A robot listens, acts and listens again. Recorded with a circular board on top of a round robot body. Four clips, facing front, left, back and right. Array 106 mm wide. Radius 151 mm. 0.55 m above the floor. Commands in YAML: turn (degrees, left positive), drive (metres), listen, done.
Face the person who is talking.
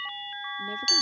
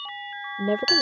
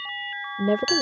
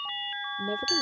turn: 145
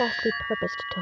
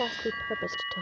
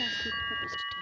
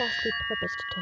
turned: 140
done: "Found it: a woman speaking, straight ahead."